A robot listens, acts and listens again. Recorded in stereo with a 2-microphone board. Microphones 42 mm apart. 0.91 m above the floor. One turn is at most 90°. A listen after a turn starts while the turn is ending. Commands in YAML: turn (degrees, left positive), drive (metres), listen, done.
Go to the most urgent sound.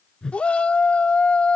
turn: 30
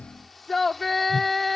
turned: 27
drive: 1.0
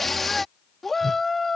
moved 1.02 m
drive: 1.0
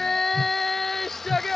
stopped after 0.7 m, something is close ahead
done: "Arrived at the shout, straight ahead."